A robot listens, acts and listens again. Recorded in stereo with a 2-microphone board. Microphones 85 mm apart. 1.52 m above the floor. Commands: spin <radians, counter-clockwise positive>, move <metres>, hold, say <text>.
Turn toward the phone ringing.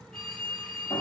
spin -0.52
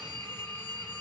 spin 0.44
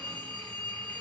spin 0.17
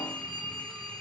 say Facing the phone ringing.